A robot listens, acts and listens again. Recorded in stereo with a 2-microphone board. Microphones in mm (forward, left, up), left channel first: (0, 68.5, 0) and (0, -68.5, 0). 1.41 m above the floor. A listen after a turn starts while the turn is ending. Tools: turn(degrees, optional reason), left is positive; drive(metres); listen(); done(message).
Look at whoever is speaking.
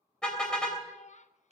turn(degrees=60, reason="The child speaking: about 60° left or 120° left.")
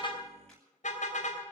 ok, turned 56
listen()
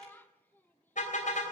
turn(degrees=15, reason="So it is at 15° left.")
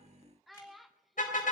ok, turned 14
done("Found it: a child speaking, straight ahead, under 1 m away.")